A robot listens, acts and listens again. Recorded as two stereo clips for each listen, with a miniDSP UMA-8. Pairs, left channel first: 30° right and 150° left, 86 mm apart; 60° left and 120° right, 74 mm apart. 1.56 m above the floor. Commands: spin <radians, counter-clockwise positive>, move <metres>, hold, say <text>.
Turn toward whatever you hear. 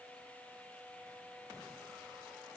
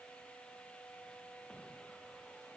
hold
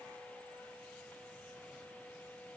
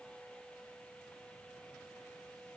hold
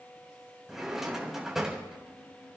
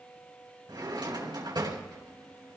spin -2.18
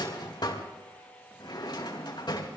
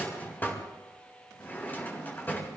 say Facing the drawer, 2 to 4 m away.